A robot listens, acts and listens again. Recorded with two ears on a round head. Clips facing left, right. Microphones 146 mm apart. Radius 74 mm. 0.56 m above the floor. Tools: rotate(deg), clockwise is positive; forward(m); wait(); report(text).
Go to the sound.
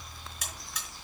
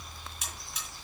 rotate(-65)
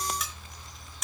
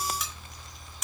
forward(1.0)
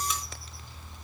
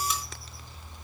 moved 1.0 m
wait()
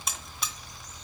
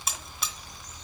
forward(1.0)
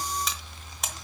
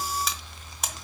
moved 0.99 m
forward(1.0)
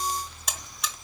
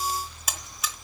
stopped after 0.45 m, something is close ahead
report("I am next to the buzzer.")